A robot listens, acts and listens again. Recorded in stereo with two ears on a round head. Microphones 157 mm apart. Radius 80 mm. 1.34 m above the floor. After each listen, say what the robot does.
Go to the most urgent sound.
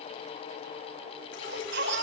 Turn 75° right.
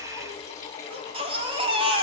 Turn 30° right.
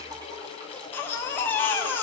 Turn 10° left.
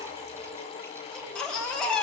Drive 1.0 m forward.
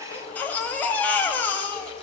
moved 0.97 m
Turn 10° left.
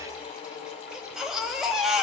Drive 1.0 m forward.
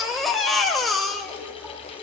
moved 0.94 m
Drive 1.0 m forward.
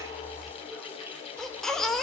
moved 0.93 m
Drive 1.0 m forward.
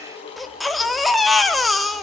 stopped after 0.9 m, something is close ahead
I am next to the baby crying.